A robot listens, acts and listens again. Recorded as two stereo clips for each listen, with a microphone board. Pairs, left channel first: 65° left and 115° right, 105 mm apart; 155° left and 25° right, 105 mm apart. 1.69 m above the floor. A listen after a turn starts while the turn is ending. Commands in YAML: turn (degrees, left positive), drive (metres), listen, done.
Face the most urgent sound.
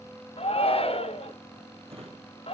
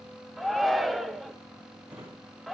turn: 65
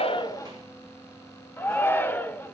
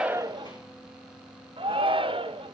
done: "Found it: a shout, straight ahead, 1 to 2 m away."